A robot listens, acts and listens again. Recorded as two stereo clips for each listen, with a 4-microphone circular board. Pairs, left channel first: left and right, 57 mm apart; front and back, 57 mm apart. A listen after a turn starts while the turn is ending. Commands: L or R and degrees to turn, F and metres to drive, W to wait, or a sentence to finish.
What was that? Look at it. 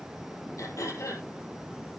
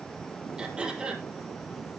L105
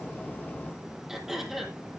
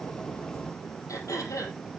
Found it: throat clearing, straight ahead, over 4 m away.